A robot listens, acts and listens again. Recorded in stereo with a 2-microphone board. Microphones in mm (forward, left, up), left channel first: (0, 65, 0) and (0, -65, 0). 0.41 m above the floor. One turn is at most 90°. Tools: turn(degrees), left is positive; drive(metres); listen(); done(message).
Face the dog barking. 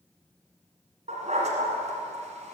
turn(degrees=-65)
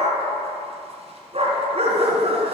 turn(degrees=-50)
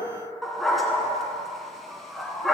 done("Facing the dog barking.")